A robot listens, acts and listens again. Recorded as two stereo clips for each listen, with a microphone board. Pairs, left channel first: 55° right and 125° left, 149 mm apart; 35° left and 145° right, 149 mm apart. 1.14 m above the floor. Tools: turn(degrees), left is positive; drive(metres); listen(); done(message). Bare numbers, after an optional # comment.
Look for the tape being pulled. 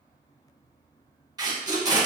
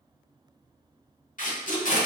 # The tape being pulled: 60° left.
turn(60)
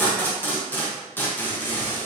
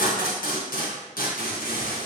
# The tape being pulled is now 20° left.
turn(20)
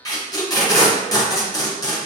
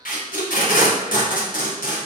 # The tape being pulled is now 10° left.
turn(10)
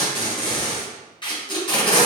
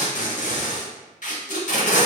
done("Facing the tape being pulled, under 1 m away.")